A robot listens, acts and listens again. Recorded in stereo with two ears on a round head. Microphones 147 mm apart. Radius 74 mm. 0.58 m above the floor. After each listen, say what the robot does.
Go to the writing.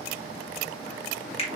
Keep listening.
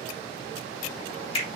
Keep listening.
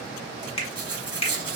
Turn 30° right.
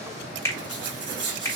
Turn 145° right.
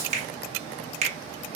Keep listening.
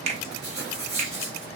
Drive 1.0 m forward.
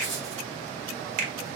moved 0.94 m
Keep listening.
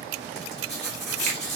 Drive 1.0 m forward.
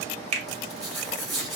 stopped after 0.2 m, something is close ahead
Arrived at the writing, straight ahead.